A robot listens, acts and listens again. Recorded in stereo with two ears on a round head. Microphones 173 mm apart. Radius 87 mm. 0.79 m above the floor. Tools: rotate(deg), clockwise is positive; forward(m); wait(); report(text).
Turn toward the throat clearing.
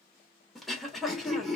rotate(-30)
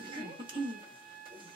rotate(30)
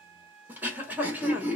rotate(10)
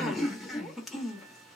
report("Facing the throat clearing.")